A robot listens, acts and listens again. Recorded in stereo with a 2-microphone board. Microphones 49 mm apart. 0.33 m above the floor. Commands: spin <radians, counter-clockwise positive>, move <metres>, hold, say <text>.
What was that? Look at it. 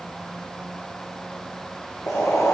spin 1.57
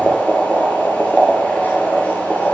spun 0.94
spin 0.61
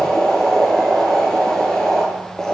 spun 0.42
spin 0.26
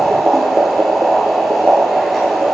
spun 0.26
say Found it: boiling, straight ahead.